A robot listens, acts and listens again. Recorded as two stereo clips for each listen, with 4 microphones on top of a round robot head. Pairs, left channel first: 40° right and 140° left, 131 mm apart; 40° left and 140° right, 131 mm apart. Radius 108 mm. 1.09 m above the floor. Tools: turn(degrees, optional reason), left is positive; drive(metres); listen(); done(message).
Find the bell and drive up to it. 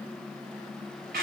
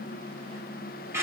listen()
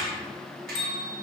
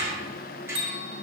turn(degrees=-95, reason="The bell: 95° right.")
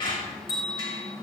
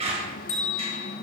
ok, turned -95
turn(degrees=20, reason="The bell is now 20° left.")
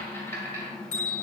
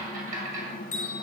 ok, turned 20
turn(degrees=10, reason="The bell is now 10° left.")
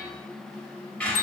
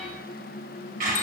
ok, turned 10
listen()
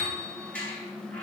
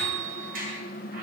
drive(metres=1.0)
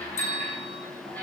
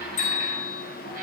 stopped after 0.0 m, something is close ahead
done("Something is in my way. I am facing the bell but have not reached it.")